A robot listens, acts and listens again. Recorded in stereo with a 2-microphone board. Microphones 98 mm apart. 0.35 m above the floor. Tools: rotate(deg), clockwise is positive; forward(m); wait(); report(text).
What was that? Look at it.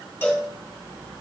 rotate(-20)
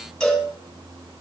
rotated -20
report("Facing the cowbell.")